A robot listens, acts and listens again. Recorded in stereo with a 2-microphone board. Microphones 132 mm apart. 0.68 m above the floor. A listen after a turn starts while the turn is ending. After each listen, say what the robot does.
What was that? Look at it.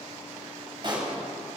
Turn 40° right.
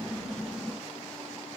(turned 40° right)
Keep listening.
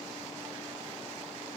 I heard a pop, but can't make it out now. It was about straight ahead or 100° right.